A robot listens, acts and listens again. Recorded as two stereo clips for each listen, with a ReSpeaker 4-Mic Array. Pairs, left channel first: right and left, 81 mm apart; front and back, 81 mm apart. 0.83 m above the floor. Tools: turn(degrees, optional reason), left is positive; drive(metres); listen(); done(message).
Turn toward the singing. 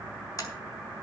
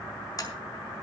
listen()
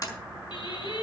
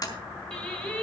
turn(degrees=-75, reason="The singing: 75° right.")
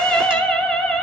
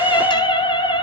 done("Found it: singing, straight ahead.")